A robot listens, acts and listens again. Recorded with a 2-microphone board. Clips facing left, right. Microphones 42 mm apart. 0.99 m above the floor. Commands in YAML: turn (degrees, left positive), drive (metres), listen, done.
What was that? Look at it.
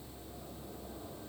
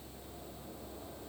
listen: true
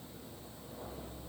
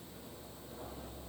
listen: true
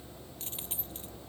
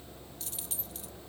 turn: 30
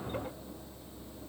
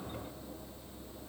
listen: true
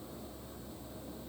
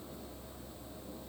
done: "I heard a dropped coin, but can't make it out now. It was about straight ahead or 120° left."